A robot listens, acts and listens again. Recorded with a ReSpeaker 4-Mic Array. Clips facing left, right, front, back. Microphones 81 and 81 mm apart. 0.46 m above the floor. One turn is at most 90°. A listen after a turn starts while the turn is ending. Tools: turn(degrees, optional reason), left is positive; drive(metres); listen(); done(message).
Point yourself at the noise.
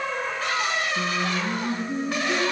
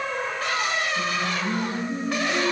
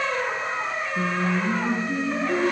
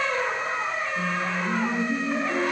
turn(degrees=60, reason="The singing: 60° left.")
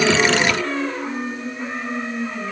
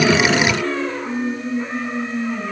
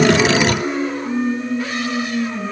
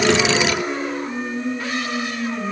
done("Found it: singing, straight ahead.")